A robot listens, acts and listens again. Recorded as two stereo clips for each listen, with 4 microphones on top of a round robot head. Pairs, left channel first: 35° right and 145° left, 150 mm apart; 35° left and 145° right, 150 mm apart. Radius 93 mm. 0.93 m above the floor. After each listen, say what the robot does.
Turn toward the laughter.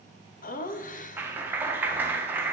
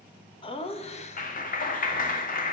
Found it: laughter, straight ahead.